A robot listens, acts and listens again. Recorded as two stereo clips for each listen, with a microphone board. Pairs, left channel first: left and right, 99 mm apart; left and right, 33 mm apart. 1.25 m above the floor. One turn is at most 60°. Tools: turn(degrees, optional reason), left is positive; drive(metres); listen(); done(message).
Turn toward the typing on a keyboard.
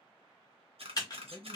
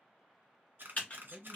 turn(degrees=40, reason="The typing on a keyboard: about 40° left or 140° left.")
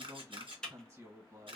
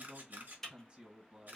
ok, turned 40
turn(degrees=10, reason="So it is at 10° left.")
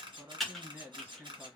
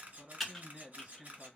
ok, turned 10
done("Found it: typing on a keyboard, straight ahead, 1 to 2 m away.")